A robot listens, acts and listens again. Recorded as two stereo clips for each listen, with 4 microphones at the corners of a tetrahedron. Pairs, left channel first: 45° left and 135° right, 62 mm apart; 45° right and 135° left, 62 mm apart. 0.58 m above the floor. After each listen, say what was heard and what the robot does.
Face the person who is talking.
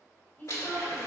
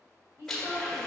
The woman speaking: 100° left. Turn 100° left.
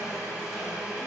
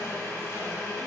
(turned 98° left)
Keep listening.
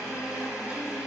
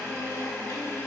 Keep listening.
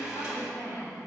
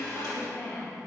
The woman speaking is now 20° left. Turn 20° left.
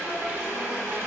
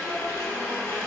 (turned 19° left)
Keep listening.
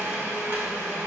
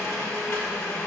Keep listening.
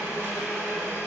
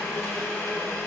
I heard a woman speaking from this way, but can't make it out now.